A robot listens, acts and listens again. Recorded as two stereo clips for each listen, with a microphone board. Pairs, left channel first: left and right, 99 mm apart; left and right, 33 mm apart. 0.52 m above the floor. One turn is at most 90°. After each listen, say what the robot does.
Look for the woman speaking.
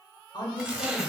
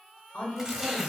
Turn 50° left.
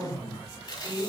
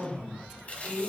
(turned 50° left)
Turn 15° left.
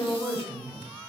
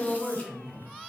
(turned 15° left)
Facing the woman speaking, 1 to 2 m away.